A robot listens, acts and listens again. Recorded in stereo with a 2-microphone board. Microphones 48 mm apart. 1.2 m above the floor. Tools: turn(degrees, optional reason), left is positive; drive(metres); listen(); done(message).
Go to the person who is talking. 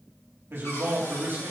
turn(degrees=-60, reason="The man speaking: about 60° right or 120° right.")
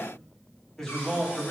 drive(metres=1.0)
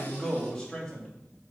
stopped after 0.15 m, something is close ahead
turn(degrees=10, reason="The man speaking is now 10° left.")
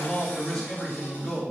done("Blocked. The man speaking is further on, straight ahead.")